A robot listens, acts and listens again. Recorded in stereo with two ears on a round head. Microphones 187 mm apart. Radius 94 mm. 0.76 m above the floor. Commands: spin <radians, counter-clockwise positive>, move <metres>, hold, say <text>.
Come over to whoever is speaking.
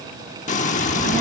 spin -0.79
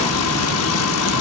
spin -1.48
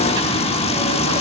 spin -0.35
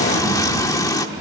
move 1.0
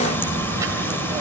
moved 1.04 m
spin -0.26
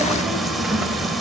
move 1.0
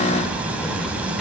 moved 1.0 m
move 1.0
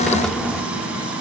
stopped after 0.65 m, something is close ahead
say I am next to the child speaking.